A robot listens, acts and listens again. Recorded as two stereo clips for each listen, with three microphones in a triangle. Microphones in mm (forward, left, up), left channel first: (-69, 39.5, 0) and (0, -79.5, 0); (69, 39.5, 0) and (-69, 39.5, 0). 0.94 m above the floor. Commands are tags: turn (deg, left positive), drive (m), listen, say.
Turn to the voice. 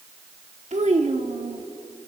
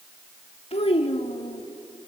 <turn deg="-40"/>
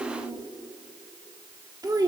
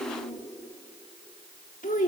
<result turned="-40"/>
<say>Facing the child speaking.</say>